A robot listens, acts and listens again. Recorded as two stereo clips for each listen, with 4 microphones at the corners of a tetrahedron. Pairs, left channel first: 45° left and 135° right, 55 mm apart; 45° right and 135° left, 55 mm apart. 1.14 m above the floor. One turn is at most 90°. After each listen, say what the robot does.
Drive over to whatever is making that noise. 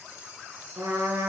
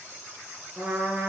Turn 90° right.
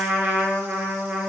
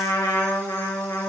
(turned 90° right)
Turn 75° right.
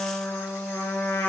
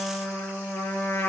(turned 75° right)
Turn 10° right.
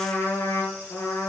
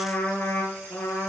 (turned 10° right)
Drive 1.0 m forward.
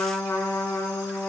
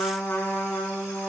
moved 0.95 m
Drive 1.0 m forward.
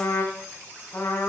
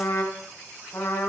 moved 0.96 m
Drive 1.0 m forward.
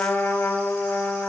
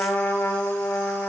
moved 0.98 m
Drive 1.0 m forward.
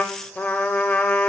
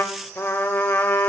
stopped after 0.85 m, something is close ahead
Turn 15° right.
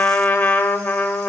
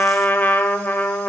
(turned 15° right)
I am next to the trumpet.